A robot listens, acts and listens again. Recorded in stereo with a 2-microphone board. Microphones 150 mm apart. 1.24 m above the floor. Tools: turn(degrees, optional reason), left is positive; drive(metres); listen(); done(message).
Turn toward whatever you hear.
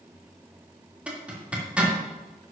turn(degrees=-30)
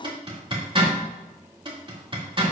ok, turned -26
turn(degrees=-145, reason="So it is at 145° right.")
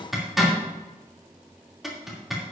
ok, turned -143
done("Found it: a zipper, straight ahead.")